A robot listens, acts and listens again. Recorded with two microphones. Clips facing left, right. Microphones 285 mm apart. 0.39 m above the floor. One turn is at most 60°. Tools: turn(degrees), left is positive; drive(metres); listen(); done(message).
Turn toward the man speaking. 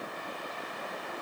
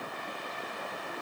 listen()
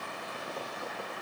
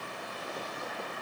listen()
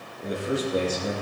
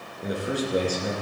turn(degrees=-15)
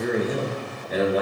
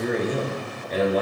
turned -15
turn(degrees=30)
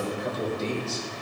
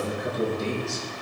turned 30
turn(degrees=-15)
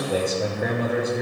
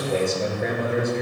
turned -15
done("Facing the man speaking, over 4 m away.")